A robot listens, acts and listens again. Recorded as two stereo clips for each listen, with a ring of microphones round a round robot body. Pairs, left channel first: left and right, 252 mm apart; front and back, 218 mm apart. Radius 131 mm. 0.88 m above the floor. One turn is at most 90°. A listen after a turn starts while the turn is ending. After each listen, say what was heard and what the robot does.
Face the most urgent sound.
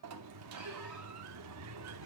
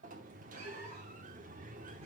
Keep listening.
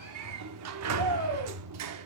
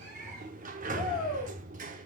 The shout: 75° right. Turn 75° right.
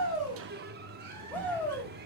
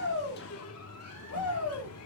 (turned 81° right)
Facing the shout, over 4 m away.